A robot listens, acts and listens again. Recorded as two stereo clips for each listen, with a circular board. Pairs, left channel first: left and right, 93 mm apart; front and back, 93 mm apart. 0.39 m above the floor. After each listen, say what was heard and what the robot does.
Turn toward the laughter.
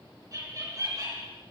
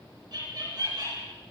The laughter: 135° right. Turn 135° right.
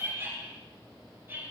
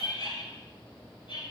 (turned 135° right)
The laughter is now 25° right. Turn 25° right.
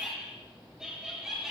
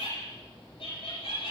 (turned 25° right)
Found it: laughter, straight ahead.